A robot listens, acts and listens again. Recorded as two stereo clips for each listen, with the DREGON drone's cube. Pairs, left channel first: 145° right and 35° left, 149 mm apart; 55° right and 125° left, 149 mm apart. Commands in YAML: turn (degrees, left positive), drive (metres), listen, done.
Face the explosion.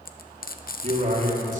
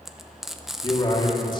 listen: true
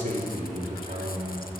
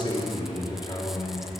listen: true
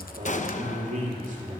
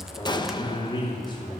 turn: -115
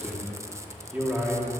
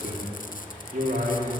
done: "Facing where the explosion came from. I can't hear it now."